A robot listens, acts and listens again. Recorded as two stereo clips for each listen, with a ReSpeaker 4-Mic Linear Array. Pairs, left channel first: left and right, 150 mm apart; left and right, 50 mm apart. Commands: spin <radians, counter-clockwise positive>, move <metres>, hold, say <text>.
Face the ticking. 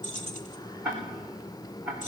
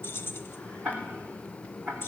spin -0.52
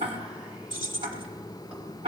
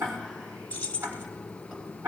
spin -2.44
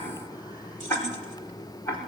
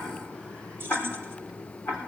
spin 0.35
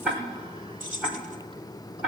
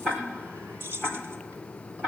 say Facing the ticking.